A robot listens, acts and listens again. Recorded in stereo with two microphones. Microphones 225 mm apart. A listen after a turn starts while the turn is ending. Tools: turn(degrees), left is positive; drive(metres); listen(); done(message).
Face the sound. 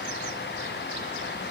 listen()
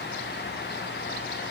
listen()
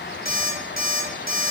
turn(degrees=-40)
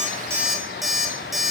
done("Found it: an alarm clock, straight ahead.")